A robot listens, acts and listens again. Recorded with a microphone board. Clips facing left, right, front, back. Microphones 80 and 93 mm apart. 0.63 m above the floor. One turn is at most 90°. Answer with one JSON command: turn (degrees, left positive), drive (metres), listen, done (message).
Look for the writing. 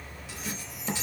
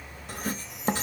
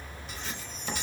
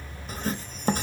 {"turn": -90}
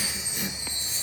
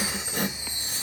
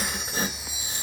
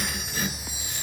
{"turn": -55}
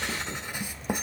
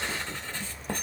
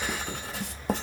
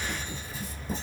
{"turn": 10}
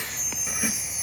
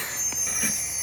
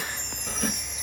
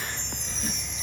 {"done": "Facing the writing."}